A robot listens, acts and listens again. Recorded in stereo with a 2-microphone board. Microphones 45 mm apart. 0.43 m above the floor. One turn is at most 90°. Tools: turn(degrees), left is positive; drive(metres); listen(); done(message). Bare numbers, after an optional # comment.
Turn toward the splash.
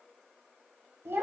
listen()
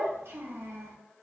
listen()
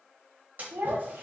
# The splash: about 35° right or 145° right.
turn(-35)
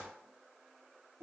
listen()
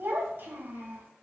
done("I heard a splash, but can't make it out now. It was about straight ahead or 110° right.")